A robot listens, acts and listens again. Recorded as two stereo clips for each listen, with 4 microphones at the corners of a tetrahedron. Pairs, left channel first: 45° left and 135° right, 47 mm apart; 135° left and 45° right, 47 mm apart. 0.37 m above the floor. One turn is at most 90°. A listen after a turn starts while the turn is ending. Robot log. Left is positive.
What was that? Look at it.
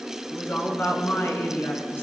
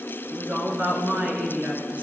note: The woman speaking: 10° left.
cmd yaw +10
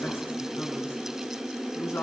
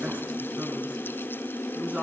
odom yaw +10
note: The woman speaking is now 15° left.
cmd yaw +15
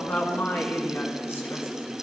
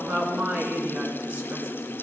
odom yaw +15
end: Found it: a woman speaking, straight ahead.